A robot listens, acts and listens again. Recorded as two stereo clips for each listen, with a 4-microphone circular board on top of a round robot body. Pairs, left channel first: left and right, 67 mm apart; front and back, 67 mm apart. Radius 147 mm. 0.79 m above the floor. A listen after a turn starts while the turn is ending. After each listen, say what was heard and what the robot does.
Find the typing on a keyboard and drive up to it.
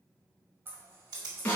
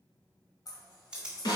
The typing on a keyboard: 100° right. Turn 100° right.
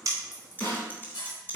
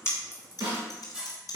The typing on a keyboard is now 30° left. Turn 30° left.
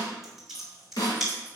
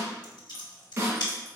Drive 1.0 m forward.
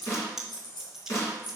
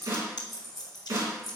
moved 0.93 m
Drive 1.0 m forward.
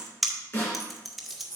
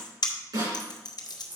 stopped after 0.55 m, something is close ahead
I am next to the typing on a keyboard.